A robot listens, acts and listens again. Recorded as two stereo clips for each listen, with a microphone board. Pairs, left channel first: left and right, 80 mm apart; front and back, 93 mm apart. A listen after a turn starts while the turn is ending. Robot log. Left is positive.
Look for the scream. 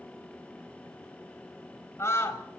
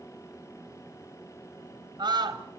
note: The scream: 145° left.
cmd yaw +145
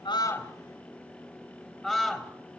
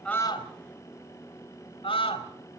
end: Found it: a scream, straight ahead.